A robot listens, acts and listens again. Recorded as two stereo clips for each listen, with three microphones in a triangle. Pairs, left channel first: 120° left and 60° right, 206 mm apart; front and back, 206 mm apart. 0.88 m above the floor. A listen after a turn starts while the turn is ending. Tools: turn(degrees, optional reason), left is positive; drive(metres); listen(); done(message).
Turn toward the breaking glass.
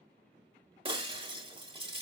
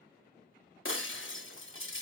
done("Facing the breaking glass.")